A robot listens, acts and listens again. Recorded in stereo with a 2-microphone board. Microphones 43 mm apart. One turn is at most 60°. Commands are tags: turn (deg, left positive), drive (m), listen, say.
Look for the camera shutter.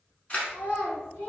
<turn deg="30"/>
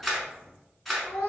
<say>Facing the camera shutter, 1 to 2 m away.</say>